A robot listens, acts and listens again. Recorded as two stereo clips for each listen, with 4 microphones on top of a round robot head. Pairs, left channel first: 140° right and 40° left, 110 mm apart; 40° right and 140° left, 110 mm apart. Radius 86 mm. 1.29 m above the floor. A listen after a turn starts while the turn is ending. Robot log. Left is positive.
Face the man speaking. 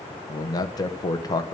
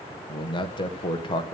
note: The man speaking: 85° right.
cmd yaw -85
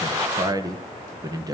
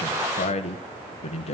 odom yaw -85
note: The man speaking is now 15° right.
cmd yaw -15
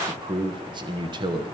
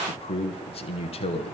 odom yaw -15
note: The man speaking is now 10° right.
cmd yaw -10
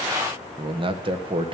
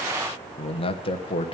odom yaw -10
end: Found it: a man speaking, straight ahead.